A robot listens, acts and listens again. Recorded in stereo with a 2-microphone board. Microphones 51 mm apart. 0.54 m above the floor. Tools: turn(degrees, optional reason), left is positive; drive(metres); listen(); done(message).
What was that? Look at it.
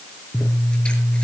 turn(degrees=20, reason="The scissors: about 20° left or 160° left.")
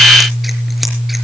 done("Found it: scissors, straight ahead, over 4 m away.")